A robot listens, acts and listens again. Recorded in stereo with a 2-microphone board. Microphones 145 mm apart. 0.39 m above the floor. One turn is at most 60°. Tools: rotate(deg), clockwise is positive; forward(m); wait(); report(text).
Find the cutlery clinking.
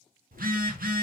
wait()
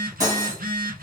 rotate(25)
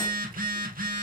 wait()
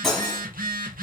report("Facing the cutlery clinking, 1 to 2 m away.")